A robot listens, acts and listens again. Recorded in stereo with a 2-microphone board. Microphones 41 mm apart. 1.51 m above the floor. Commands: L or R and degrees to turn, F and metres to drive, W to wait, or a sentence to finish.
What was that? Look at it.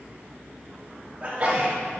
R35
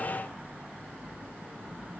W
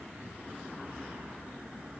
I heard a sneeze, but can't make it out now. It was about straight ahead or 110° right.